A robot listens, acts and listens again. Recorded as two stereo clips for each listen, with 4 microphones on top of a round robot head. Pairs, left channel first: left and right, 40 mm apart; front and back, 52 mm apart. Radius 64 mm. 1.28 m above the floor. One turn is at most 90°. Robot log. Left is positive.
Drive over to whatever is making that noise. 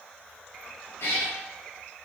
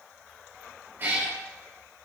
note: The cat meowing: 125° left.
cmd yaw +90
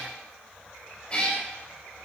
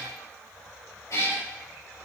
note: The cat meowing is now 25° left.
cmd yaw +25
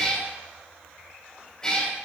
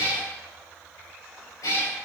note: The cat meowing is now 10° left.
cmd yaw +10
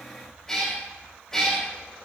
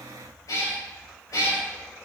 cmd fwd 1.0
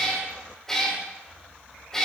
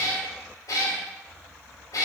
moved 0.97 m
note: The cat meowing is now 10° left.
cmd yaw +10
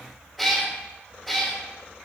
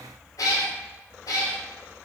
cmd fwd 1.0
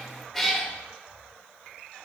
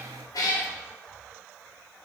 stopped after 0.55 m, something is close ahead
end: I am next to the cat meowing.